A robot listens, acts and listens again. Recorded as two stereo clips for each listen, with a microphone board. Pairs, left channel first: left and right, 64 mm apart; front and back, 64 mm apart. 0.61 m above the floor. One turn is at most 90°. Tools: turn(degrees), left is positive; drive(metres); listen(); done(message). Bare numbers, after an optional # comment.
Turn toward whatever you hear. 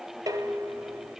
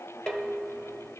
# The dishes clattering: 80° right.
turn(-80)
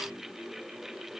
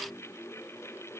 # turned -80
listen()
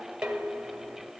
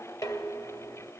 # The dishes clattering is now 15° right.
turn(-15)
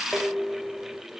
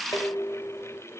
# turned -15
done("Facing the dishes clattering, 1 to 2 m away.")